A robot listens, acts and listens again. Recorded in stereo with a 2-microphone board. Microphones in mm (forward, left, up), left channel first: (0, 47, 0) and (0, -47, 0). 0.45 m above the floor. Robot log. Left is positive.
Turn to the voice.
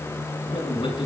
note: The man speaking: about 75° left or 105° left.
cmd yaw +75
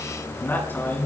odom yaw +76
note: So it is at 25° left.
cmd yaw +25
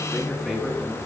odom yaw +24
end: Found it: a man speaking, straight ahead.